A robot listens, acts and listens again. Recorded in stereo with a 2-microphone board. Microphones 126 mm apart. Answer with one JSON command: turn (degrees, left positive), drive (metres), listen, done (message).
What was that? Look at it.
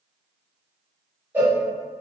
{"turn": -15}
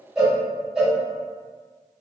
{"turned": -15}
{"done": "Facing the cowbell, 1 to 2 m away."}